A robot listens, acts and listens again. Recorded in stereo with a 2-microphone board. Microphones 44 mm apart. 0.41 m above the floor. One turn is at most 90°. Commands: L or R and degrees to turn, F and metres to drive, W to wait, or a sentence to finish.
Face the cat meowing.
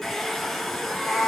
R30
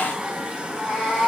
L20
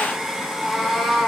Facing the cat meowing.